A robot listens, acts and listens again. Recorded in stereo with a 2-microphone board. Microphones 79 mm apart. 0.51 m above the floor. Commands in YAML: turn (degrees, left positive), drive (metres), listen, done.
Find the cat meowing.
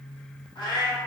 turn: 90
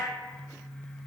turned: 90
listen: true
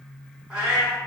turn: -10
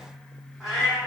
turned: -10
done: "Found it: a cat meowing, straight ahead, 1 to 2 m away."